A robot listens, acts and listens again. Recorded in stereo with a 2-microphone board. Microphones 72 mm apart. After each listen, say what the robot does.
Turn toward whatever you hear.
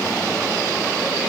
Keep listening.
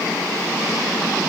Keep listening.
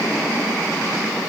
I can't make out anything to turn to.